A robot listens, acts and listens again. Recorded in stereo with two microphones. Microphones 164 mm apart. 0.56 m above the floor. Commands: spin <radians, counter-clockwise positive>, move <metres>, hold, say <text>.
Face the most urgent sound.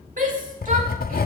spin -0.96
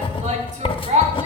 spin -0.96
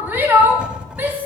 spin -0.26
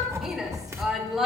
say Found it: a shout, straight ahead, 1 to 2 m away.